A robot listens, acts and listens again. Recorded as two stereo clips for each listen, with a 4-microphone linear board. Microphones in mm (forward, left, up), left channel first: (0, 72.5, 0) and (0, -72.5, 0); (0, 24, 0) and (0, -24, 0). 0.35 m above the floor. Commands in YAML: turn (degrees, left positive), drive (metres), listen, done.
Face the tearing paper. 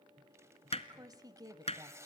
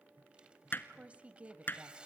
turn: -20
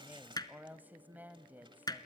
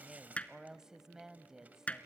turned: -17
listen: true
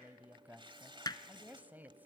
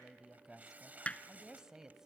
turn: -145
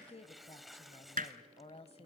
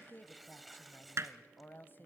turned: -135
done: "Found it: tearing paper, straight ahead."